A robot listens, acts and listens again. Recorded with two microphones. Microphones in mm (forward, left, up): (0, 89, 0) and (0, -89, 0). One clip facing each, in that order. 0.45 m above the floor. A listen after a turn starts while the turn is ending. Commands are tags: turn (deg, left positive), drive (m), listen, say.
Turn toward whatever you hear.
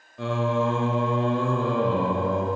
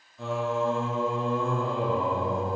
<turn deg="90"/>
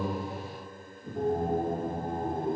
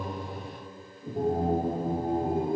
<turn deg="-10"/>
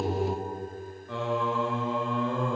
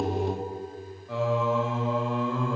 <say>Found it: singing, straight ahead.</say>